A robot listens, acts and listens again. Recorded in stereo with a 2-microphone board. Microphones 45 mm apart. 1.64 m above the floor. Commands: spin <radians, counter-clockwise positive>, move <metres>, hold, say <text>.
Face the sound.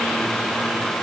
hold
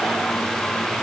hold
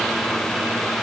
say I can't make out anything.